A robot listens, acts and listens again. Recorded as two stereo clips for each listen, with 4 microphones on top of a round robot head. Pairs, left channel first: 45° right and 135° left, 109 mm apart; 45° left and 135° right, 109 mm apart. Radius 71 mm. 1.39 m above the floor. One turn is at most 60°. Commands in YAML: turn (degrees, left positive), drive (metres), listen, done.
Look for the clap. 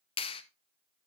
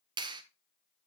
turn: -60
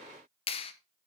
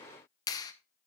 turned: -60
turn: -10
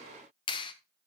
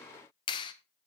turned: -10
done: "Found it: a clap, straight ahead, 1 to 2 m away."